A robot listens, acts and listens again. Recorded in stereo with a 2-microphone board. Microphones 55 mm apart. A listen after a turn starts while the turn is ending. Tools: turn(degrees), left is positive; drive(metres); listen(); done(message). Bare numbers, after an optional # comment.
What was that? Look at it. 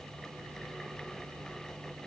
listen()
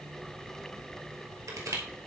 # The crushing: about 70° right or 110° right.
turn(-70)
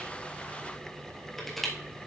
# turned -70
done("Found it: crushing, straight ahead.")